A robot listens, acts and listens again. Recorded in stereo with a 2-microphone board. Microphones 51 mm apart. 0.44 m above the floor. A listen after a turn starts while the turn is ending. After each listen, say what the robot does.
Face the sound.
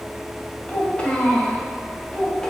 Turn 20° left.
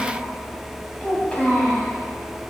Turn 20° left.
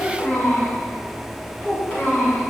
Turn 30° left.
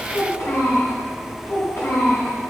Turn 120° left.
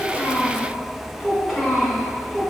Facing the child speaking, 2 to 4 m away.